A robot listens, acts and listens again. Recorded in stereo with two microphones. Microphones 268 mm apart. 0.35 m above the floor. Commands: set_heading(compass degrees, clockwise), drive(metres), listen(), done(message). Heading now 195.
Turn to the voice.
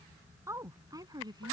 set_heading(210)
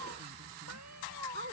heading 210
set_heading(250)
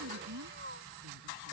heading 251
set_heading(356)
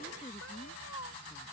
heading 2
listen()
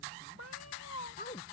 set_heading(327)
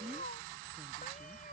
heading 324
listen()
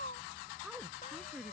done("Facing the woman speaking.")